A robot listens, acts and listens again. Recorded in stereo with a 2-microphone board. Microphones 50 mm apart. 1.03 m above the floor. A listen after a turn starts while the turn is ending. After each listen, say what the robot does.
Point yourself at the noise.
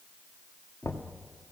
Turn 90° left.
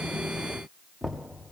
Found it: knocking, straight ahead, 1 to 2 m away.